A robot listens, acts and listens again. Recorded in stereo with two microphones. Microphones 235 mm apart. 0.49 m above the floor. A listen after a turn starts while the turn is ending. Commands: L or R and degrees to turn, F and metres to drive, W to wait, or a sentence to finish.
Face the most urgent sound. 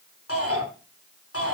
L90
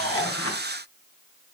W
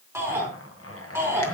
R10
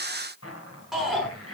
Facing the shout.